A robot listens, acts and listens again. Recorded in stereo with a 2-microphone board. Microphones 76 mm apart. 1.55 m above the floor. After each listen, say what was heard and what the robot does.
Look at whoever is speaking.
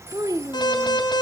The child speaking: about 50° right or 130° right. Turn 50° right.
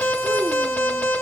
Keep listening.
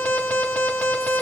Keep listening.
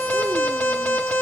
I heard a child speaking, but can't make it out now. It was about straight ahead or 80° right.